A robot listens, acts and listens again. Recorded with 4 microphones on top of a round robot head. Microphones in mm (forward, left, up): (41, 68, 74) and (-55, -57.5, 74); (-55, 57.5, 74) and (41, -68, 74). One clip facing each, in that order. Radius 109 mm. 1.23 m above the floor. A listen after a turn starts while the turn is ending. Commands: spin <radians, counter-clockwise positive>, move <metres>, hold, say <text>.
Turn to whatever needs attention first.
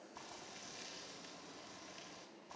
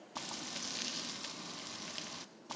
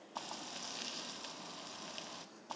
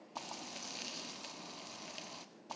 hold
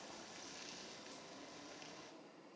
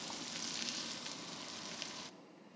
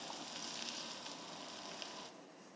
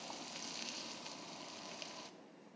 hold
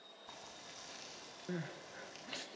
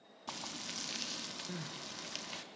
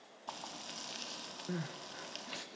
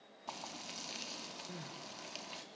spin 1.75
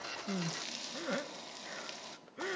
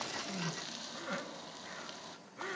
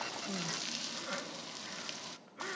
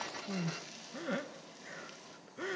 say Facing the crying.